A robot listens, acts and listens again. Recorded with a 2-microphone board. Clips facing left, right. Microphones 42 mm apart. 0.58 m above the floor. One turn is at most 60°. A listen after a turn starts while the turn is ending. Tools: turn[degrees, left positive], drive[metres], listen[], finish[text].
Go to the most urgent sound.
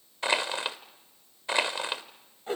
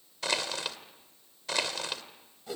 Action: listen[]
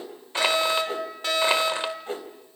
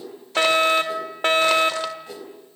Thought: The fire alarm: about 50° right or 130° right.
Action: turn[-50]
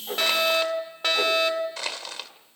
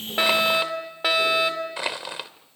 Thought: So it is at 15° right.
Action: turn[-15]
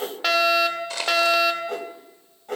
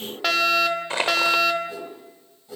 Action: drive[1.0]
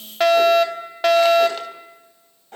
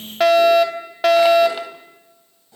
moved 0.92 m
Action: drive[1.0]
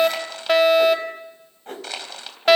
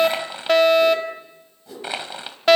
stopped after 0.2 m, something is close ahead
Action: finish[Arrived at the fire alarm, straight ahead.]